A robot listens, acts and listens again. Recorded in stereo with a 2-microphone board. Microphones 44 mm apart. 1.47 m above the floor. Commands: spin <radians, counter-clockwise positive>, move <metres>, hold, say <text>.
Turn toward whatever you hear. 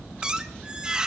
spin -0.35
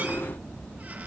hold
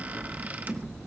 spin -2.27
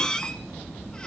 spin 0.44
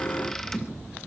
spin 0.26
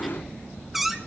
say Found it: a squeak, straight ahead, 1 to 2 m away.